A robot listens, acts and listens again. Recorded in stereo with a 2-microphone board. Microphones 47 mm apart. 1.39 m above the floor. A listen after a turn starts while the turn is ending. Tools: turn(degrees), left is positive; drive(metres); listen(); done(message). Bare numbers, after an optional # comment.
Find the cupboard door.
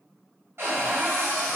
# The cupboard door: about 55° right or 125° right.
turn(-55)
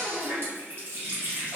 listen()
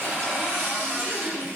# So it is at 55° right.
turn(-55)
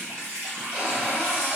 # The cupboard door is now 25° right.
turn(-25)
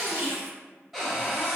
done("Found it: a cupboard door, straight ahead, under 1 m away.")